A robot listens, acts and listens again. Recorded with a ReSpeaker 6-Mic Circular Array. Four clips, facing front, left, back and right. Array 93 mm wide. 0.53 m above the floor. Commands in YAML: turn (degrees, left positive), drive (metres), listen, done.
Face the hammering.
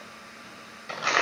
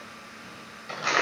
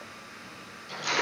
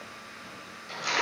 listen: true
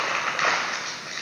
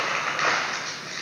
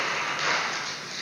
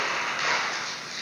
listen: true
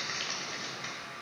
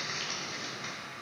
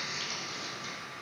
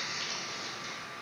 done: "I can't make out hammering, only crumpling."